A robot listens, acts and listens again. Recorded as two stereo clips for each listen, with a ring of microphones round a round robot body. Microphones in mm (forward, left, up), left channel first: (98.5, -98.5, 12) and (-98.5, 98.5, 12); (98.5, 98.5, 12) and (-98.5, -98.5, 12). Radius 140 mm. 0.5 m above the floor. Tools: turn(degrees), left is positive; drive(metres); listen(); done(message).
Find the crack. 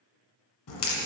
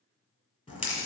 turn(degrees=-30)
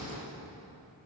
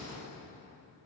done("Facing the crack.")